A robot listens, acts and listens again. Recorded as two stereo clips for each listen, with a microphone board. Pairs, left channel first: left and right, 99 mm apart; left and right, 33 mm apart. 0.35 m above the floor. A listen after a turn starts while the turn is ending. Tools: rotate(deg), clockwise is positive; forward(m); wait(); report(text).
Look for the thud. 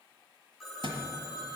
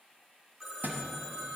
rotate(65)
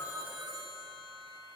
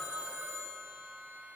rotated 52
wait()
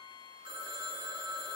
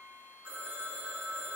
report("I heard a thud, but can't make it out now. It was about 10° right or 65° right.")